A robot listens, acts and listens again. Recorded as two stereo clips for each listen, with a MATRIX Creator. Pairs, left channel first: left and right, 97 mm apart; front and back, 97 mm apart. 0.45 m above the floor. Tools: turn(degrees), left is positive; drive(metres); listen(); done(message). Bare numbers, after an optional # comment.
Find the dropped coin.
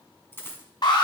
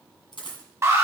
# The dropped coin: 25° left.
turn(25)
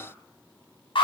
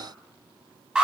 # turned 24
done("Facing where the dropped coin came from. I can't hear it now.")